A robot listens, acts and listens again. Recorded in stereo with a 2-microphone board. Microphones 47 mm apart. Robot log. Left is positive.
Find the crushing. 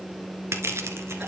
cmd yaw -90
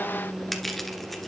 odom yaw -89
end: Facing the crushing.